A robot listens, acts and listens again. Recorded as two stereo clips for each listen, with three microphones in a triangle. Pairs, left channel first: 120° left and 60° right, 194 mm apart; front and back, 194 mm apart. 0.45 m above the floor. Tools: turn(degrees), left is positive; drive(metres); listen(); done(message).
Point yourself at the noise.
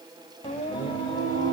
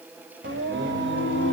turn(degrees=-170)
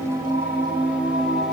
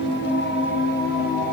turn(degrees=30)
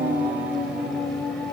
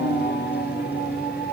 turn(degrees=35)
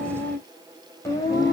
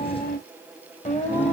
turn(degrees=50)
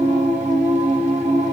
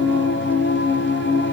done("Facing the singing.")